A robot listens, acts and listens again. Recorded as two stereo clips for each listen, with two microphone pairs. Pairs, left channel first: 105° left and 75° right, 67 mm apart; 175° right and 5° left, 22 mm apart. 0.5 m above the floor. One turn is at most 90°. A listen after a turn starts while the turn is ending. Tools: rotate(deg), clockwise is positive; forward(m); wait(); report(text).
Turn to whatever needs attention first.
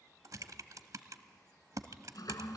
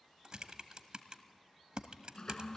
wait()
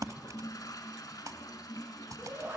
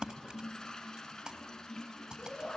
rotate(90)
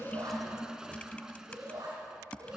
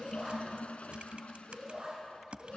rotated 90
rotate(50)
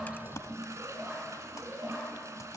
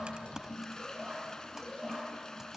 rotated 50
rotate(10)
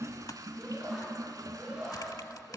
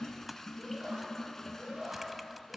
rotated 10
report("Found it: a shout, straight ahead.")